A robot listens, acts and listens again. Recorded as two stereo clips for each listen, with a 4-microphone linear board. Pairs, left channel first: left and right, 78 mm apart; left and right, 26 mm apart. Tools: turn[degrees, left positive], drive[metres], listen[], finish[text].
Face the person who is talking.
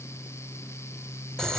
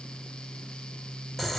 Action: listen[]
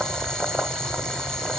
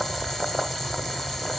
Action: listen[]
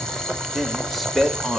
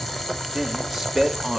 Action: turn[30]
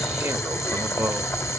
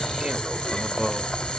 Thought: So it is at 30° right.
Action: turn[-30]
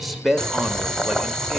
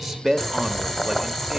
Action: finish[Facing the man speaking, 1 to 2 m away.]